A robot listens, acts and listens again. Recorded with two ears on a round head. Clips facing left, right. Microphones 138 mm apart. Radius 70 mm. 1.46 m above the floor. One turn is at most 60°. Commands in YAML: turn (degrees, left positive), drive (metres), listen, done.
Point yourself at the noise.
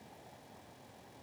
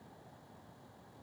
listen: true
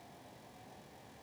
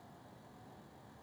listen: true
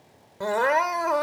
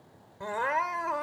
turn: 60
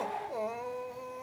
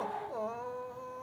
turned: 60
turn: 15
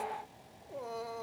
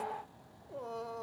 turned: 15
done: "Found it: crying, straight ahead."